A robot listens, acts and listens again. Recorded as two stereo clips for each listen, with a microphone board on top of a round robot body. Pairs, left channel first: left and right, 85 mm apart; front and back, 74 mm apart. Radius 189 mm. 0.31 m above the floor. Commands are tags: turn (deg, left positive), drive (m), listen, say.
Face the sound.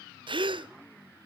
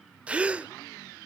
<turn deg="-105"/>
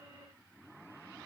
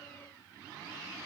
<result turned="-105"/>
<say>Facing where the gasp came from. I can't hear it now.</say>